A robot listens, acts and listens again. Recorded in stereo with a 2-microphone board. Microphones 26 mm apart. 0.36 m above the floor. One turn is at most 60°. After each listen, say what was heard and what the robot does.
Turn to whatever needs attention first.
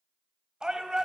The shout: about 30° right or 150° right. Turn 30° right.
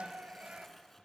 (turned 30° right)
So it is at 110° right. Turn 60° right.
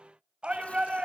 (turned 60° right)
The shout is now 60° right. Turn 60° right.
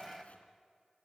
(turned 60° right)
Facing the shout, 2 to 4 m away.